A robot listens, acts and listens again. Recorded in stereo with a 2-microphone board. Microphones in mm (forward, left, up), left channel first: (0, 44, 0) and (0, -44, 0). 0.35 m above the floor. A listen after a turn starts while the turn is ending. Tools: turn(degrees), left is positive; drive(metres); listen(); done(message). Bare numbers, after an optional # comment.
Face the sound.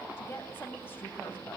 # The woman speaking: about 25° left or 155° left.
turn(25)
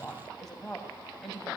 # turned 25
done("Found it: a woman speaking, straight ahead, 2 to 4 m away.")